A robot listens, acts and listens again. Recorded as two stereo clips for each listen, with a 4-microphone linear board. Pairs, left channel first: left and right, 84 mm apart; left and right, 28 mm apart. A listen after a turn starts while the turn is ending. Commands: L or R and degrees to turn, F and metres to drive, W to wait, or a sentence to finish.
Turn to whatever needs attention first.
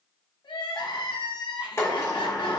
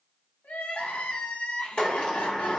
L70
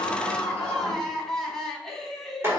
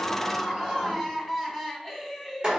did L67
Facing the crying.